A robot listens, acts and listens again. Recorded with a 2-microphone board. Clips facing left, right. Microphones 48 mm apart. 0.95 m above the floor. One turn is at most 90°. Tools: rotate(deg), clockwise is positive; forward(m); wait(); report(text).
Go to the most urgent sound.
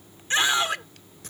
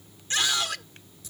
rotate(-25)
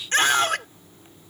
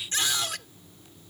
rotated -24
rotate(-90)
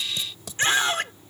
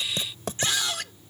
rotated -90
rotate(-40)
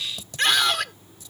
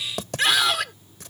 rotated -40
forward(1.0)
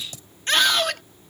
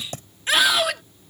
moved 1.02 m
forward(1.0)
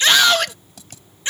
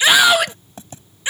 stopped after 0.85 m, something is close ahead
rotate(10)
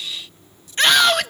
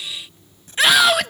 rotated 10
report("Arrived at the scream, straight ahead.")